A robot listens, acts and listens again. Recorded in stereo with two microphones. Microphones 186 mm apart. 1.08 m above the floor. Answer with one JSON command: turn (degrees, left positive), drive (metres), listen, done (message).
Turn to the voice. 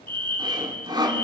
{"listen": true}
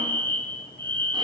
{"listen": true}
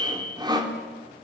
{"done": "I can't make out anyone speaking, only sawing and a fire alarm."}